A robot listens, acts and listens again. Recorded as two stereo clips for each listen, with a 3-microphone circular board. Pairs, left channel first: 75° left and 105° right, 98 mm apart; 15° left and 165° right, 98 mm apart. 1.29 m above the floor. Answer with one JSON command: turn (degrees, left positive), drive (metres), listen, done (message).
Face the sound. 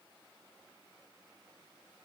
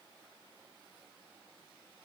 {"listen": true}
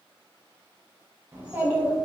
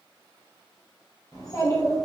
{"turn": -30}
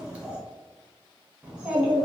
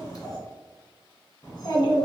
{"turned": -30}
{"turn": -25}
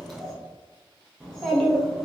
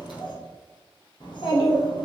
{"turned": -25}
{"turn": -10}
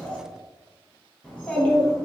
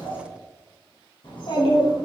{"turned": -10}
{"done": "Facing the child speaking."}